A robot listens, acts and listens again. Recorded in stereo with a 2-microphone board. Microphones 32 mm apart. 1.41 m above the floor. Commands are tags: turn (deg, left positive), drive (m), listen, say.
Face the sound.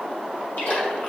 <turn deg="65"/>
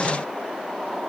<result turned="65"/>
<listen/>
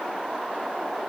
<say>I heard a splash, but can't make it out now. It was about straight ahead or 50° left.</say>